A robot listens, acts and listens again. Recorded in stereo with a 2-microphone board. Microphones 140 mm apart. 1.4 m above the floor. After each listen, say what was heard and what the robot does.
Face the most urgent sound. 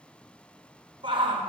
The shout: about 40° right or 140° right. Turn 40° right.
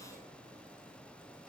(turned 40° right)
Keep listening.
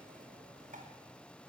So it is at 100° right. Turn 100° right.
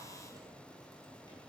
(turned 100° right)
Keep listening.
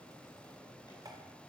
Keep listening.
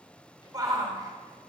The shout is now 25° right. Turn 25° right.
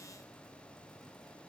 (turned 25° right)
Keep listening.
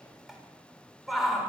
Facing the shout.